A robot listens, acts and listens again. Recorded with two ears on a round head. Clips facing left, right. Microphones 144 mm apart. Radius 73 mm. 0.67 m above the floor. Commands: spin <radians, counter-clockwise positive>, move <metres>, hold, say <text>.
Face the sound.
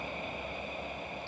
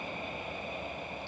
hold
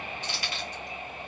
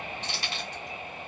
spin -0.44
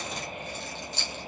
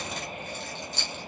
spin -2.27
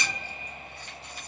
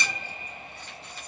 hold
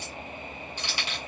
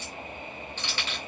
spin 0.26
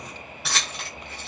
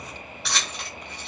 say Found it: keys jangling, straight ahead.